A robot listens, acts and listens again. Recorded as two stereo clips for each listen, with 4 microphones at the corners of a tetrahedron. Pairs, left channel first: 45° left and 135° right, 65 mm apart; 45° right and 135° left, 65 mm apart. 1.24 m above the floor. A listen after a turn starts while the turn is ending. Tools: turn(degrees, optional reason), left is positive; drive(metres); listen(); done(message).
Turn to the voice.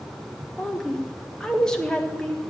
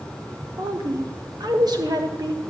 turn(degrees=125, reason="The woman speaking: 125° left.")
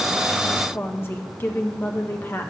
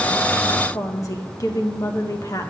turn(degrees=-10, reason="The woman speaking is now 10° right.")
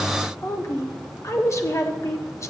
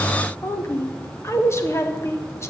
done("Facing the woman speaking.")